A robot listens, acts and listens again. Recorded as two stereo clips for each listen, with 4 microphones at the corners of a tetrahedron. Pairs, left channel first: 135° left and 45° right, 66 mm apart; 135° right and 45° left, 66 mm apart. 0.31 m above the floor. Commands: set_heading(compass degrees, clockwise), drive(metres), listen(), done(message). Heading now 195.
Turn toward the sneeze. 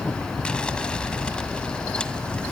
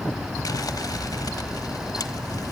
listen()
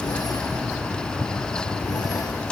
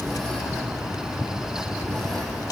listen()
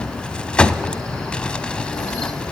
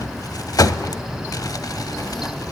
done("I can't make out a sneeze, only crumpling.")